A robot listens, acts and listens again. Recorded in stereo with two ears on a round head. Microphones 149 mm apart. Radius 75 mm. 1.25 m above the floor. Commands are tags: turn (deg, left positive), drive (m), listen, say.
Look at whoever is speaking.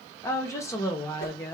<turn deg="15"/>
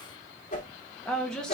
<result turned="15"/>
<say>Facing the woman speaking.</say>